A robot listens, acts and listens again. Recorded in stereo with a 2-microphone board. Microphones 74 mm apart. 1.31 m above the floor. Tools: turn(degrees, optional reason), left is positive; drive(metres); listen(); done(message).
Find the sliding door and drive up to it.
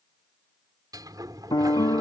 turn(degrees=-60, reason="The sliding door: about 60° right or 120° right.")
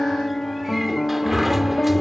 drive(metres=1.0)
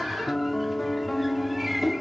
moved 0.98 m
drive(metres=1.0)
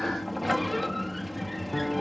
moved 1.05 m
drive(metres=1.0)
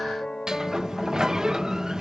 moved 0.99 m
turn(degrees=-10, reason="The sliding door is now 10° right.")
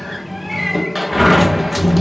drive(metres=1.0)
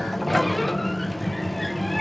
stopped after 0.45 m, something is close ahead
done("Arrived at the sliding door, straight ahead.")